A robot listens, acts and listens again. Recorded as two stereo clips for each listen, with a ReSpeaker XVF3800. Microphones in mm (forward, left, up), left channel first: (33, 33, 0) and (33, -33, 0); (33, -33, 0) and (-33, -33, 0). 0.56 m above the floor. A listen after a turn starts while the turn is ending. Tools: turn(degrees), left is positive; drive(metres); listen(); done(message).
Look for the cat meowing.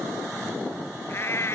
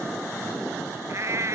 turn(degrees=135)
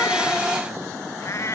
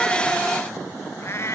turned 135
turn(degrees=45)
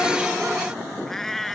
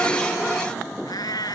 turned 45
done("Facing the cat meowing.")